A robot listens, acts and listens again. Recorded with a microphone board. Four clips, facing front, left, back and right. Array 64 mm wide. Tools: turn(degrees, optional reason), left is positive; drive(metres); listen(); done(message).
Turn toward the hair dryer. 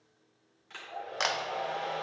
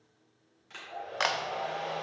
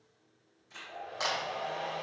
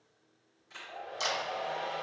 turn(degrees=35, reason="The hair dryer: 35° left.")
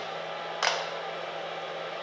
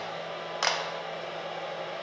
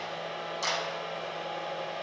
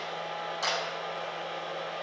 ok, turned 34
done("Facing the hair dryer.")